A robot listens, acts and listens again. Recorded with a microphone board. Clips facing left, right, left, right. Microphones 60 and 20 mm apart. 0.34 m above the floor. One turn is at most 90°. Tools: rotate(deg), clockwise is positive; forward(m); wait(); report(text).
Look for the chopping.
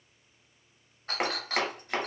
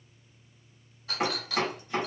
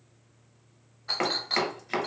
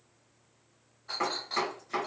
rotate(-90)
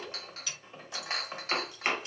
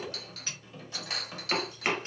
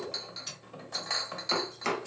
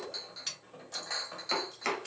report("Facing the chopping, 1 to 2 m away.")